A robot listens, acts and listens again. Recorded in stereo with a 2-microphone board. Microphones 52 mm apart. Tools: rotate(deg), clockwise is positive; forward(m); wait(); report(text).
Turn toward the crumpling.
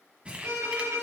rotate(20)
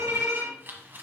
rotate(135)
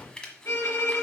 rotate(-15)
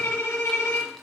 wait()
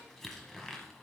report("Facing the crumpling.")